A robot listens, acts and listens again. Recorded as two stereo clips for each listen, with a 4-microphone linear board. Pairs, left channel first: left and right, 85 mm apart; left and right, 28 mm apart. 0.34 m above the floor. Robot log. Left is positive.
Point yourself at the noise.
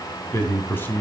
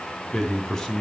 note: The man speaking: about 25° left or 155° left.
cmd yaw +25
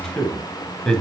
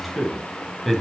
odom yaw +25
note: So it is at 10° left.
cmd yaw +10
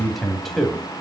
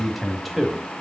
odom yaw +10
end: Facing the man speaking, 2 to 4 m away.